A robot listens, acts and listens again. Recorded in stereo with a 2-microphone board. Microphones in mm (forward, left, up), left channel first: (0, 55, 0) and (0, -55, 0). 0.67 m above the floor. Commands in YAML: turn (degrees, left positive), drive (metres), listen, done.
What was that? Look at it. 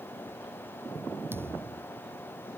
turn: -20
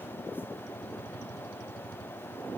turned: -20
listen: true
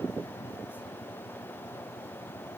done: "I heard a thud, but can't make it out now. It was about straight ahead or 140° right."